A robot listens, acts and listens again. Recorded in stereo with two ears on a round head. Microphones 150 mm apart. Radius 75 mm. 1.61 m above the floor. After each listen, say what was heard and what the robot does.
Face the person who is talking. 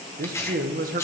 The man speaking: about 55° right or 125° right. Turn 55° right.
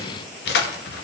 Keep listening.
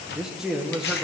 Facing the man speaking.